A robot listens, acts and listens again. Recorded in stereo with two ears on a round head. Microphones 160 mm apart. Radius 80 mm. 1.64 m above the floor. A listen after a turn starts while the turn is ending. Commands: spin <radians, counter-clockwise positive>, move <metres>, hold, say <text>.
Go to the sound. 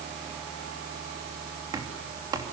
spin -0.35
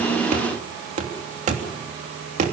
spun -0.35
spin -2.36
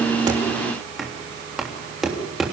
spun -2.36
move 1.0
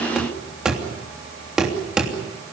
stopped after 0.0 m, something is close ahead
say Blocked. The knocking is further on, straight ahead.